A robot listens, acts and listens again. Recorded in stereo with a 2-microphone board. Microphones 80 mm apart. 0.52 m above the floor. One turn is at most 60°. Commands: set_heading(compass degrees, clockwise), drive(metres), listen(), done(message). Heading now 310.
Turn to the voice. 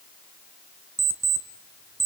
listen()
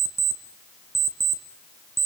listen()
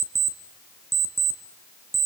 done("I can't make out anyone speaking, only an alarm clock.")